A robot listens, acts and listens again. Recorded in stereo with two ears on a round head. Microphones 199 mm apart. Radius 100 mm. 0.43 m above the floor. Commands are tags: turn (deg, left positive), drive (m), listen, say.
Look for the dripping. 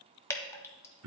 <turn deg="30"/>
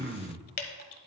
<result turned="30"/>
<turn deg="135"/>
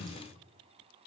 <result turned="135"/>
<listen/>
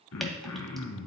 <listen/>
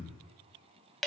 <say>Found it: dripping, straight ahead.</say>